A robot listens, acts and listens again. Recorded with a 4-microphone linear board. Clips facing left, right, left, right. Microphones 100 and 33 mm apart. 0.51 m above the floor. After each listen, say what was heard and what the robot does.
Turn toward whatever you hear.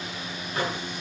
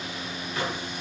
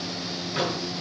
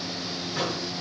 The microwave: about 40° left or 140° left. Turn 40° left.
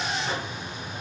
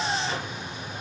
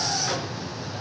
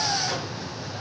So it is at 95° left. Turn 95° left.
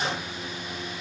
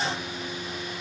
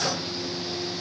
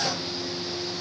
Keep listening.
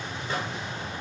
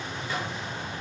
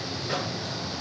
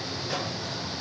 The microwave is now 40° left. Turn 40° left.
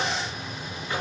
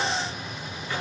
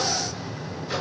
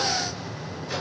The microwave is now 20° left. Turn 20° left.
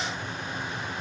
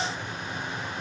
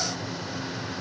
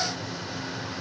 Keep listening.
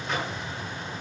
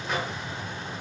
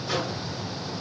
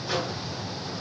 Facing the microwave.